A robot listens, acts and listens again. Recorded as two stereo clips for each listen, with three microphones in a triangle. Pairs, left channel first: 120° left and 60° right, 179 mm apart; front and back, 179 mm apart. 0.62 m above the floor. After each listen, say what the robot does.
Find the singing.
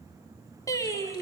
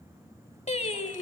Turn 50° left.
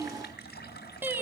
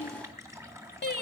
Turn 15° left.
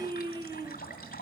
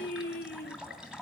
Facing the singing, 1 to 2 m away.